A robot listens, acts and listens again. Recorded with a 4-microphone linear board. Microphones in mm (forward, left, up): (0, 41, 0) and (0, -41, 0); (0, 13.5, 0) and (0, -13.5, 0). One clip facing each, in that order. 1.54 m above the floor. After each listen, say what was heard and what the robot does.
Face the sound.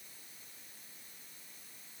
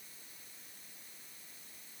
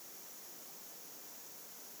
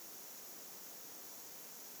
Keep listening.
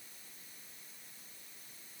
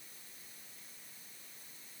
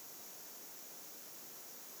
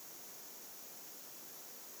Keep listening.
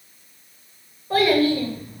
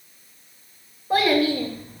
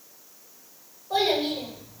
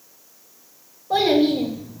The child speaking: about 15° right or 165° right. Turn 15° right.
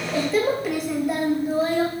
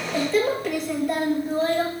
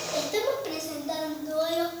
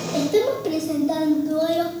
Turn 30° left.
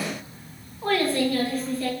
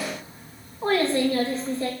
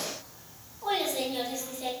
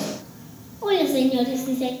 So it is at 25° right. Turn 25° right.
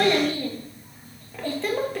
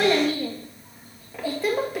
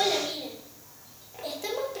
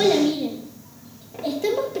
The child speaking is now 10° right. Turn 10° right.
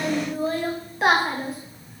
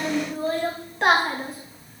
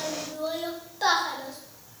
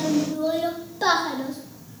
Facing the child speaking, 1 to 2 m away.